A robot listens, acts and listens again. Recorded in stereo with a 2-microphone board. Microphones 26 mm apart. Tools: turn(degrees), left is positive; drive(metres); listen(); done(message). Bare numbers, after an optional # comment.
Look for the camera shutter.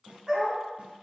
listen()
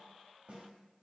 listen()
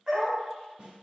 done("I can't make out a camera shutter to turn to.")